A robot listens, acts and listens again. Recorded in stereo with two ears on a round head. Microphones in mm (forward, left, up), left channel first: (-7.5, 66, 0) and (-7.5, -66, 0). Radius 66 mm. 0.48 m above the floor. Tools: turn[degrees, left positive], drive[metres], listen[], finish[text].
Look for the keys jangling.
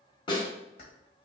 Thought: The keys jangling: about 75° left or 105° left.
Action: turn[75]
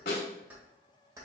Thought: So it is at 25° right.
Action: turn[-25]
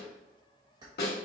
Thought: The keys jangling is now 30° right.
Action: turn[-30]
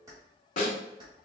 Thought: The keys jangling is now 30° right.
Action: turn[-30]
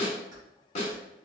Action: listen[]
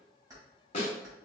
Thought: The keys jangling is now 25° right.
Action: turn[-25]
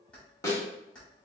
Action: finish[Facing the keys jangling, 2 to 4 m away.]